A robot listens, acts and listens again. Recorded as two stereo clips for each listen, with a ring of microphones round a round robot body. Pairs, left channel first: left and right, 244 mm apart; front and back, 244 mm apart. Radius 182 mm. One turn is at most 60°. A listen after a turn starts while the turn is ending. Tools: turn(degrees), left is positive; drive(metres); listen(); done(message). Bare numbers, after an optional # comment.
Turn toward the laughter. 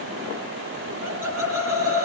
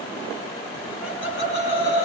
# The laughter: 55° right.
turn(-55)
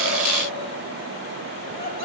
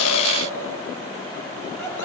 # The laughter is now 15° right.
turn(-15)
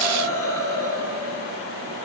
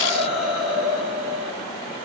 # The laughter is now 10° right.
turn(-10)
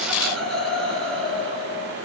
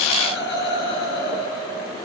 done("Facing the laughter.")